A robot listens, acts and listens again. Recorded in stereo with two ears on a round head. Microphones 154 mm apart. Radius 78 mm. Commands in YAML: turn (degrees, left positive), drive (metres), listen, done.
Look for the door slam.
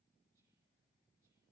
listen: true
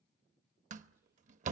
turn: -45
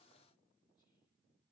listen: true
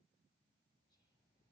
done: "I heard a door slam, but can't make it out now. It was about straight ahead or 90° right."